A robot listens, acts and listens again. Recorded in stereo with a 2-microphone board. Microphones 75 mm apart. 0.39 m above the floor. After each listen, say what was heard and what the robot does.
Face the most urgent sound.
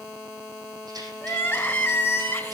The crying: about 25° left or 155° left. Turn 25° left.
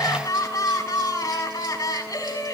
So it is at 130° left. Turn 130° left.
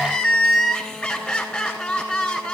The crying is now 10° left. Turn 10° left.
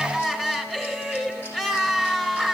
Found it: crying, straight ahead, 2 to 4 m away.